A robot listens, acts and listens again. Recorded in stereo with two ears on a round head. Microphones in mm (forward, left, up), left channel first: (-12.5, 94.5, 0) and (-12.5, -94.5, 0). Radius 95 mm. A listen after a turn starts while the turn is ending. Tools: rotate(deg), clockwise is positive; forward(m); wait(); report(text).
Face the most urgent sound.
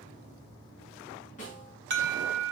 rotate(55)
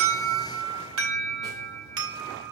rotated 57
rotate(70)
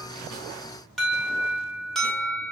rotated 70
report("Found it: an alarm, straight ahead.")